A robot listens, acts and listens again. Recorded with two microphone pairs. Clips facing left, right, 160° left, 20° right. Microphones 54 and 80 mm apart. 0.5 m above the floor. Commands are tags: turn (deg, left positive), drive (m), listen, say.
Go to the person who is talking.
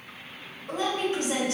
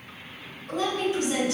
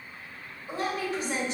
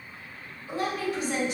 <turn deg="110"/>
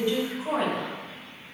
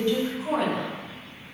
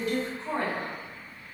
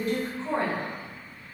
<turn deg="20"/>
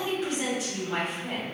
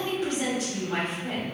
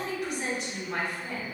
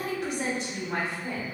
<drive m="1.0"/>
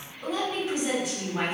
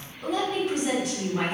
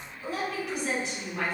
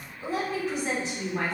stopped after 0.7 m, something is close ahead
<say>Arrived at the woman speaking, straight ahead.</say>